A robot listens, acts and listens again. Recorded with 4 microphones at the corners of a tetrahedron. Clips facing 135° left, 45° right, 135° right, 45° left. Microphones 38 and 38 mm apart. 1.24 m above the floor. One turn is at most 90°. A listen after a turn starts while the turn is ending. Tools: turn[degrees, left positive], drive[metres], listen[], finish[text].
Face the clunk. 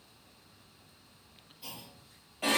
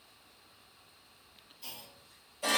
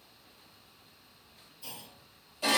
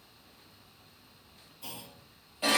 Thought: The clunk: 55° left.
Action: turn[55]
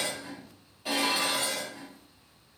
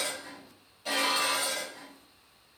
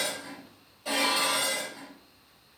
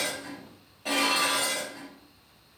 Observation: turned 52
Action: finish[Facing where the clunk came from. I can't hear it now.]